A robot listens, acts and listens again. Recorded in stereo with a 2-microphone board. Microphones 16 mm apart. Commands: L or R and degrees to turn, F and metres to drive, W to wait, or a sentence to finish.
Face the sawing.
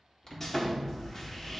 L20
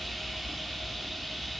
W
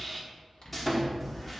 Found it: sawing, straight ahead.